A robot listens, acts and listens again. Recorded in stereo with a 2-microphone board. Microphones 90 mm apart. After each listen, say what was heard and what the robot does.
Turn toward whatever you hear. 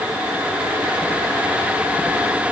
Keep listening.
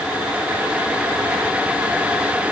Keep listening.
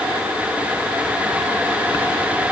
I can't make out anything.